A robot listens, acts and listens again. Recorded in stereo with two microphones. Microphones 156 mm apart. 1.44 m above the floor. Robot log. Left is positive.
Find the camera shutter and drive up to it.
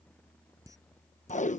note: The camera shutter: about 20° right or 160° right.
cmd yaw -20
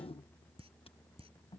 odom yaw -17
note: So it is at 145° right.
cmd yaw -145
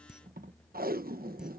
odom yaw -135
cmd fwd 1.0
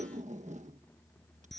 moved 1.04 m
cmd fwd 1.0
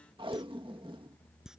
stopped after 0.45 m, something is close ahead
end: Something is in my way. I am facing the camera shutter but have not reached it.